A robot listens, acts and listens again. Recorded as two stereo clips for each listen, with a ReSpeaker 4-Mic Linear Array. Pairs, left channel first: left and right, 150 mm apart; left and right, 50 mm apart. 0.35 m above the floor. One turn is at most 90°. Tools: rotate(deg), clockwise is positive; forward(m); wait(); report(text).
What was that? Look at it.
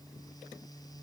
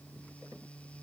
wait()
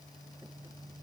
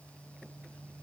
wait()
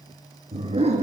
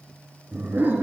rotate(45)
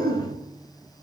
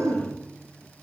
rotate(80)
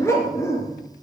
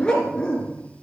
rotate(-20)
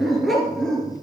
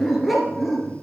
report("Facing the dog barking.")